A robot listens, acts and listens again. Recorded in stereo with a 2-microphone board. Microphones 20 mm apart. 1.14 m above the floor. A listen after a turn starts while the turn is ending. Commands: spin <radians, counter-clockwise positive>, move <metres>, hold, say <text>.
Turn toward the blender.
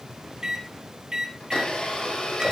spin 0.96
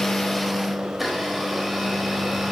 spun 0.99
say Facing the blender.